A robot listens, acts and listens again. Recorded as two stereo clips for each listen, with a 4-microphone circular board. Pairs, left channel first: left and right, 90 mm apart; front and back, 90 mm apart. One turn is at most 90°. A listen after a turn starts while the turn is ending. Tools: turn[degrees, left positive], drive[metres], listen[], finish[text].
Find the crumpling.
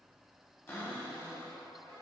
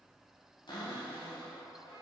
Action: listen[]
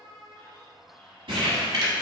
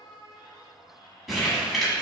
Thought: The crumpling: 90° right.
Action: turn[-90]
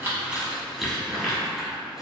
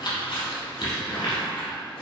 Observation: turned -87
Action: finish[Found it: crumpling, straight ahead.]